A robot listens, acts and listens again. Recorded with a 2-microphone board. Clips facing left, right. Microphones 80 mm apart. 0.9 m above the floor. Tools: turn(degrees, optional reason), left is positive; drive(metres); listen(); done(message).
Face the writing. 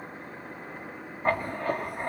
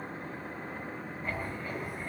turn(degrees=60, reason="The writing: about 60° left or 120° left.")
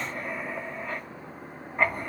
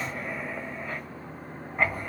done("Facing the writing, 2 to 4 m away.")